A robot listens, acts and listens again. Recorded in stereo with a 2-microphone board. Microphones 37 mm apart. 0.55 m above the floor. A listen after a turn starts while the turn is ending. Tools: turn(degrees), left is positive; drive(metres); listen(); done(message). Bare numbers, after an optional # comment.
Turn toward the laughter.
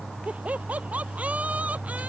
# The laughter: about 40° right or 140° right.
turn(-40)
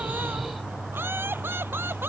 # So it is at 95° right.
turn(-95)
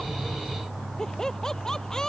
# The laughter is now 15° left.
turn(15)
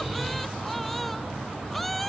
done("Facing the laughter.")